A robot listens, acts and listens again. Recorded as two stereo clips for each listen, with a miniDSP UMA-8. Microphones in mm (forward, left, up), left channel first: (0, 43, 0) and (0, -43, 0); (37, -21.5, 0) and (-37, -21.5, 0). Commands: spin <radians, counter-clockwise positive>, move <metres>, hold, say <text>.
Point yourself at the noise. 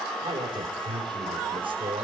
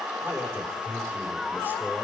spin -2.01
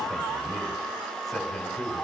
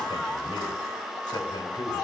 say Found it: a man speaking, straight ahead.